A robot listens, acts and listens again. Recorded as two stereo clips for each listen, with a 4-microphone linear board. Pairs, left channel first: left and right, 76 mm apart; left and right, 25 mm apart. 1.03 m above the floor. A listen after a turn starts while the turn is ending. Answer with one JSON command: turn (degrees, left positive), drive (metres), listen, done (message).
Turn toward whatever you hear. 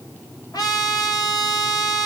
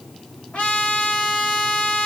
{"turn": 55}
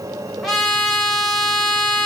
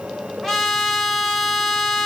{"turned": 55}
{"done": "Found it: a trumpet, straight ahead."}